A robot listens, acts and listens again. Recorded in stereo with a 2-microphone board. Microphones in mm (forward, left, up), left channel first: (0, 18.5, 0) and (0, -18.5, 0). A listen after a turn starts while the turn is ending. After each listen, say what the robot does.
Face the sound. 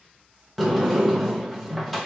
Turn 30° left.
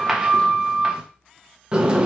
Turn 25° right.
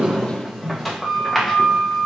Facing the sliding door.